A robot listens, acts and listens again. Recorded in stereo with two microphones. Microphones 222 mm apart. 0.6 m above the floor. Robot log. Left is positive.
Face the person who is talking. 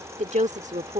note: The woman speaking: about 35° right or 145° right.
cmd yaw -35
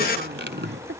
note: So it is at 105° right.
cmd yaw -105
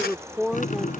end: Facing the woman speaking.